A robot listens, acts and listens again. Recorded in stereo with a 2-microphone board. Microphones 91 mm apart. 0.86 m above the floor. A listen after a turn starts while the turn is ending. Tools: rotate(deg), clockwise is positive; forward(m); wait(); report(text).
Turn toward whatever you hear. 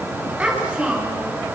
rotate(15)
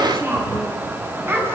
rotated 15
rotate(25)
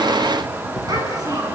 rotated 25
rotate(130)
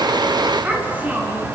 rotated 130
rotate(20)
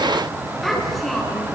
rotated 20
report("Found it: a child speaking, straight ahead.")